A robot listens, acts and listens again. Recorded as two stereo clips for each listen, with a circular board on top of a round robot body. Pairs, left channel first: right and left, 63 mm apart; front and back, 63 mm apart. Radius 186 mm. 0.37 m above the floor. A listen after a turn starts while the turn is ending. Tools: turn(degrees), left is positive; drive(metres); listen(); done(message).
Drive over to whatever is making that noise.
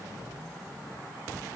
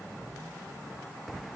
listen()
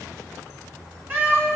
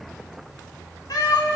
turn(degrees=25)
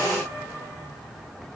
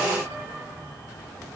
listen()
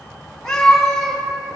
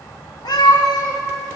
drive(metres=1.0)
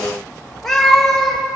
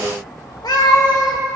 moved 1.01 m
drive(metres=1.0)
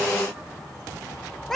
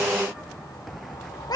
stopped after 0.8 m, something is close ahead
done("I am next to the cat meowing.")